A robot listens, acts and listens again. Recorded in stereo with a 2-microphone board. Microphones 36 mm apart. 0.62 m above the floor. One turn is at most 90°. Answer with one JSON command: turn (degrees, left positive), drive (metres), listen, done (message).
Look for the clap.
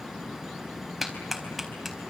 {"turn": -30}
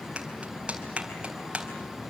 {"turn": -90}
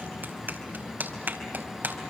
{"turn": -65}
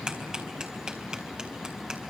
{"turn": -25}
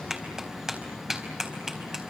{"turn": -15}
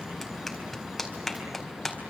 {"done": "Found it: a clap, straight ahead, over 4 m away."}